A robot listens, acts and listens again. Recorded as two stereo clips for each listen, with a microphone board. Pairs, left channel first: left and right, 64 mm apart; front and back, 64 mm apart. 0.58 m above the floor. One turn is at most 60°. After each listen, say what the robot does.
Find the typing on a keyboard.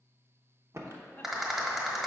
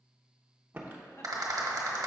Turn 60° right.
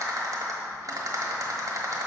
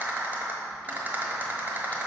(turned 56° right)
Turn 60° right.
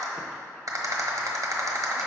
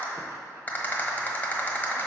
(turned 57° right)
Turn 10° right.
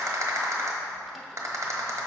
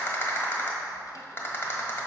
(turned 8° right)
I heard typing on a keyboard from this way, but can't make it out now.